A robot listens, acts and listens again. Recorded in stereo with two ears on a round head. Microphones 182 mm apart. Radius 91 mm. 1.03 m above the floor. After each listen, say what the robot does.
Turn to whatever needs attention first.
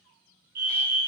Turn 50° right.
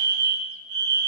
Turn 70° right.
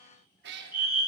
Turn 15° right.
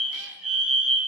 Found it: a fire alarm, straight ahead, 2 to 4 m away.